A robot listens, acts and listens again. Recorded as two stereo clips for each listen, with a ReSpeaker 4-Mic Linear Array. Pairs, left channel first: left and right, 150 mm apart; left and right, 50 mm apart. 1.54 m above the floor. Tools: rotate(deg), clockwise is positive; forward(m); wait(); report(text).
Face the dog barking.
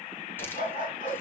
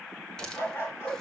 rotate(-60)
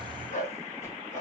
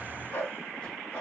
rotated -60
rotate(-55)
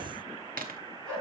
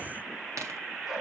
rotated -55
report("Facing the dog barking, over 4 m away.")